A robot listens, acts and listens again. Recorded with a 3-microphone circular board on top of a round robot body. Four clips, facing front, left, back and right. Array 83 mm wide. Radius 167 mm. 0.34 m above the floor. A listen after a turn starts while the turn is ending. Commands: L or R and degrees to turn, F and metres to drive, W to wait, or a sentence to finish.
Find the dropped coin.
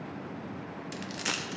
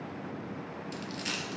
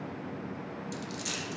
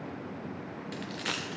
R40
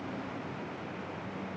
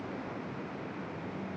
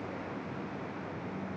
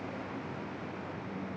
Facing where the dropped coin came from. I can't hear it now.